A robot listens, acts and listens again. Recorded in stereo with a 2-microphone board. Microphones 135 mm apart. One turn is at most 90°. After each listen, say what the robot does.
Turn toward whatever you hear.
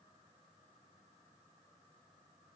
Keep listening.
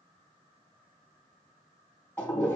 Turn 30° left.
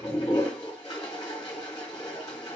Turn 90° left.
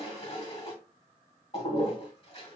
Turn 50° left.
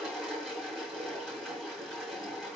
Found it: a toilet flushing, straight ahead, 1 to 2 m away.